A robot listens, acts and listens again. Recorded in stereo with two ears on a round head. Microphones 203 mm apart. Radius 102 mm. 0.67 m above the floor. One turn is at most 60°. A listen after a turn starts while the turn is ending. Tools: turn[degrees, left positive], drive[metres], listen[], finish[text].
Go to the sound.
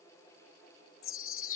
Thought: The chime: about 65° left or 115° left.
Action: turn[60]
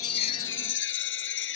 Thought: So it is at 55° left.
Action: turn[55]
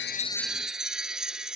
Action: drive[1.0]
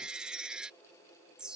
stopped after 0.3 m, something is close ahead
Action: finish[Something is in my way. I am facing the chime but have not reached it.]